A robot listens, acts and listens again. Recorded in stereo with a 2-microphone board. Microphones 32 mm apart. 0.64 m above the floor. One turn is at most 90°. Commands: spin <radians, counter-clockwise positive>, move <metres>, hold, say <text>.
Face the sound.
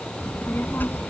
spin 1.57
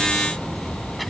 say Facing the child speaking.